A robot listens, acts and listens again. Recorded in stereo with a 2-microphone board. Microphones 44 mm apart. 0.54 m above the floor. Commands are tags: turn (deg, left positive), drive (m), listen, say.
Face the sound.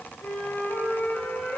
<turn deg="45"/>
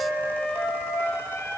<turn deg="85"/>
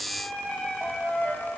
<turn deg="20"/>
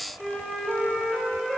<say>Found it: a flute, straight ahead, 1 to 2 m away.</say>